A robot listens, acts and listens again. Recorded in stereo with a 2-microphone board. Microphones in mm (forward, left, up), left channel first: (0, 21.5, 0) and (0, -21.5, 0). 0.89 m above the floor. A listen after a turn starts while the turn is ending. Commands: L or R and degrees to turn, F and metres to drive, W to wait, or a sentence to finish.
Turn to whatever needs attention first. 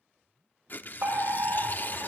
R60
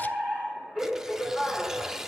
Found it: a fire alarm, straight ahead.